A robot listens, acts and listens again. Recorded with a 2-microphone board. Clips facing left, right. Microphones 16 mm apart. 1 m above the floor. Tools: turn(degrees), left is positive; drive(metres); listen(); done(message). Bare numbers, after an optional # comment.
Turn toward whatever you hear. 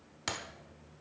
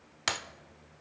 # The breaking glass: about 40° right or 140° right.
turn(-40)
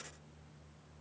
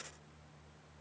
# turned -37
listen()
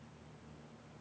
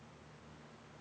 done("I heard breaking glass, but can't make it out now. It was about 5° right or 105° right.")